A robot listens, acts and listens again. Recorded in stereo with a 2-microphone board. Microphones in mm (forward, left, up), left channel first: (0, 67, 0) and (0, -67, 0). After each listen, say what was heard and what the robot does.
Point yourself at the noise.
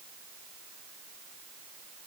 Keep listening.
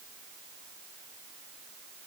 Keep listening.
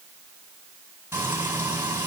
The frying: about 15° right or 165° right. Turn 15° right.
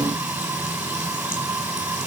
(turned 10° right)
Turn 30° right.
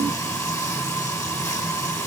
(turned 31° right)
So it is at 20° left. Turn 20° left.
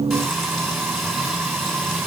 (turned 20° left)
Found it: frying, straight ahead, over 4 m away.